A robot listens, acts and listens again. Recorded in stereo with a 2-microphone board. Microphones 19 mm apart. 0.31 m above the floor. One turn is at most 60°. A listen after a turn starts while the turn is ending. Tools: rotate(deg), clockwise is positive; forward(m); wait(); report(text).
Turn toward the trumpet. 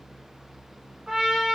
rotate(60)
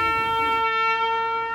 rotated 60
rotate(25)
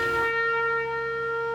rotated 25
report("Facing the trumpet, 1 to 2 m away.")